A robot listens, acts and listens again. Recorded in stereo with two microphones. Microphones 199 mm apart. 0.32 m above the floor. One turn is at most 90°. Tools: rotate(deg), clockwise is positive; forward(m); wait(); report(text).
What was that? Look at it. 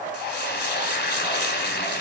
rotate(-60)
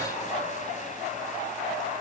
wait()
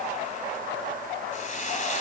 rotate(-45)
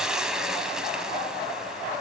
report("Found it: frying, straight ahead.")